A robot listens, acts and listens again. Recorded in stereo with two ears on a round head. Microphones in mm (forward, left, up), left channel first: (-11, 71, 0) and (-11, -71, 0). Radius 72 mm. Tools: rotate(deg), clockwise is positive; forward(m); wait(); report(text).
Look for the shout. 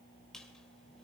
wait()
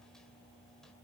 wait()
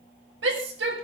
rotate(90)
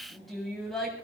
report("Facing the shout.")